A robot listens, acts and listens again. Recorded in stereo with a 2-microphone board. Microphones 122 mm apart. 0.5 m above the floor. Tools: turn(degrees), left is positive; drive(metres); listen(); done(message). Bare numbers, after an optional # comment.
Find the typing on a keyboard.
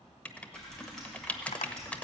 turn(30)
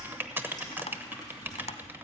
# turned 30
# So it is at 145° left.
turn(145)
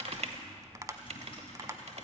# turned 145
# The typing on a keyboard is now 50° left.
turn(50)
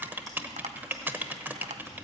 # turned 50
done("Facing the typing on a keyboard.")